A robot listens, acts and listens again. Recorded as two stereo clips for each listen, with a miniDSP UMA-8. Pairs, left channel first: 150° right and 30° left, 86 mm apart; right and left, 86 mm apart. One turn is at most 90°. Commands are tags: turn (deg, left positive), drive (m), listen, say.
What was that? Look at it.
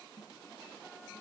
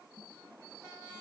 <listen/>
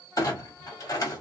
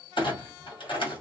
<turn deg="-90"/>
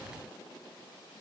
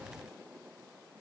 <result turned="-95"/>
<turn deg="-10"/>
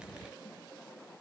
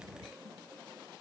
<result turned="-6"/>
<say>I heard a clunk from this way, but can't make it out now.</say>